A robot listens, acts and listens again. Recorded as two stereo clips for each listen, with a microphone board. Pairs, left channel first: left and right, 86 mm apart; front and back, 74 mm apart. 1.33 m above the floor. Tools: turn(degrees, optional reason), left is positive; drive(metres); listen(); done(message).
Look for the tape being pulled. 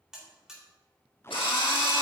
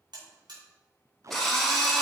turn(degrees=145, reason="The tape being pulled: 145° left.")
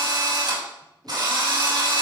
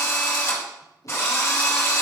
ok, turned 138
turn(degrees=10, reason="Nothing new. It was at 10° left.")
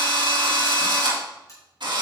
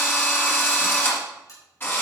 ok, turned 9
listen()
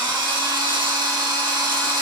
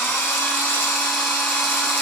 done("I heard tape being pulled from this way, but can't make it out now.")